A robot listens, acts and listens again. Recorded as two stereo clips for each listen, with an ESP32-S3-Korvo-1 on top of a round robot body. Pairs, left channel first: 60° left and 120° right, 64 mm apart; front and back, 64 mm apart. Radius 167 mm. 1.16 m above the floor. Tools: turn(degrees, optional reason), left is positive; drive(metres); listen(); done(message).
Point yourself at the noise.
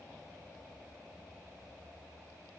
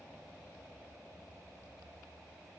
listen()
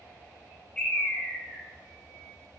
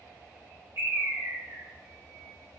turn(degrees=135, reason="The bird: 135° left.")
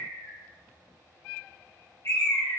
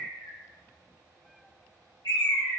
turn(degrees=15, reason="The bird is now 15° left.")
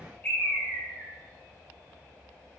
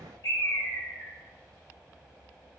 done("Facing the bird.")